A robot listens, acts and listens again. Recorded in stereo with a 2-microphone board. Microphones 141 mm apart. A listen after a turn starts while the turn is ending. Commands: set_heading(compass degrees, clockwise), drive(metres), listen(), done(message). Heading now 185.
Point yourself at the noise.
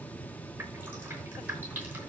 set_heading(215)
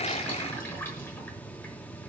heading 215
set_heading(195)
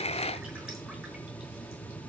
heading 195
listen()
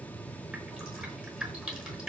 done("Found it: dripping, straight ahead, over 4 m away.")